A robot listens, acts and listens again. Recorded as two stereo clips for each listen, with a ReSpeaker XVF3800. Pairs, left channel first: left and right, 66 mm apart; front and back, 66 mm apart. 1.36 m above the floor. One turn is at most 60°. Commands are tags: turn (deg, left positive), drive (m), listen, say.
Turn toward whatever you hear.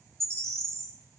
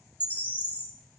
<turn deg="-55"/>
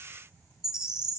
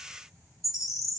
<turn deg="-15"/>
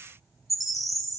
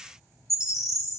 <say>Facing the bird, 1 to 2 m away.</say>